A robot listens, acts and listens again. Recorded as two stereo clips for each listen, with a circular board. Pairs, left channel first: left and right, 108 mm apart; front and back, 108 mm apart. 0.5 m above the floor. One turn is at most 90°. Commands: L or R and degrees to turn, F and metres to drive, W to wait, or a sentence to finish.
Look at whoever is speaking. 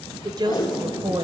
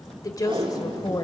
R55
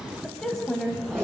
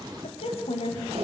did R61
Found it: a woman speaking, straight ahead.